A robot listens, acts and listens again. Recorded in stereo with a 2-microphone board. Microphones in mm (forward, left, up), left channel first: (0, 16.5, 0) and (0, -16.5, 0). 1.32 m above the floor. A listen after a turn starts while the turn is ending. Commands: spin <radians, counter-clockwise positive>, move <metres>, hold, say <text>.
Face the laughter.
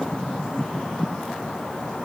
hold
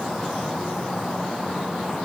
hold
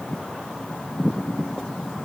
say I can't make out laughter.